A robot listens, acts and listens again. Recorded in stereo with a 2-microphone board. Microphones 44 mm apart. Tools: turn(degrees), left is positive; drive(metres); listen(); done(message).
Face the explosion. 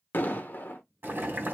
turn(degrees=50)
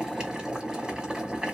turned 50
listen()
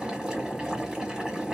done("I heard an explosion, but can't make it out now. It was about straight ahead or 80° left.")